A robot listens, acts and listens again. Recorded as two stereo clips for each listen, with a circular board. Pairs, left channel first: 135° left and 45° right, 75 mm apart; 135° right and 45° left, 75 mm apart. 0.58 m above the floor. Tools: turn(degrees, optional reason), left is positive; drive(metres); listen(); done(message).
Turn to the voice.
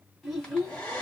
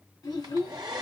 turn(degrees=-135, reason="The child speaking: 135° right.")
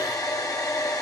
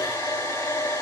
listen()
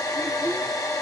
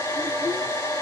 listen()
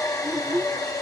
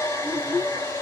turn(degrees=-20, reason="The child speaking is now 20° right.")
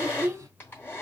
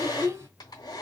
done("Found it: a child speaking, straight ahead.")